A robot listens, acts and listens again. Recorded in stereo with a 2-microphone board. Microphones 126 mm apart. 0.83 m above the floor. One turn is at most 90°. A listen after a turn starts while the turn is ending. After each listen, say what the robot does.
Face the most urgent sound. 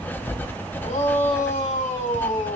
Turn 90° left.
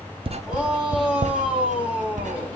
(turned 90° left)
Facing the shout.